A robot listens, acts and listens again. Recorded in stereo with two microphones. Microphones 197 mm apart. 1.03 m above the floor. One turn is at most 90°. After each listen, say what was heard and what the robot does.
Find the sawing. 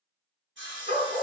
The sawing: about 75° right or 105° right. Turn 75° right.
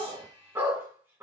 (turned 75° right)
Keep listening.
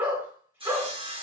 So it is at 25° right. Turn 25° right.
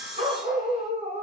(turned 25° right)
Facing the sawing, 1 to 2 m away.